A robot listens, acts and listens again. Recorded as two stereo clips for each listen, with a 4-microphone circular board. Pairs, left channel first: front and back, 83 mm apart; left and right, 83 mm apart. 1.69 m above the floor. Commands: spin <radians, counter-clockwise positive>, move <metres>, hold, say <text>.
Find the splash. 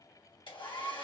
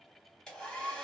hold
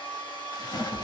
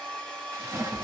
spin -0.61
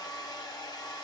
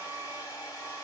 say I heard a splash from this way, but can't make it out now.